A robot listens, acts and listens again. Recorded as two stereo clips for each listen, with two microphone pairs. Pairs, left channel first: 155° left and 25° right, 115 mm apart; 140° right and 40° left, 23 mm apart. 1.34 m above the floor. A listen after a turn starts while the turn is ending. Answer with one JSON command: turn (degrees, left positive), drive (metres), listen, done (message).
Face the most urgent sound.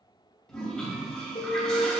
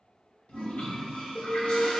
{"turn": 175}
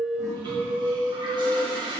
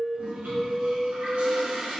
{"turn": -40}
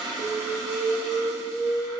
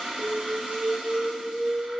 {"turn": -25}
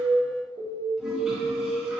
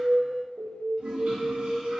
{"done": "Found it: an alarm, straight ahead."}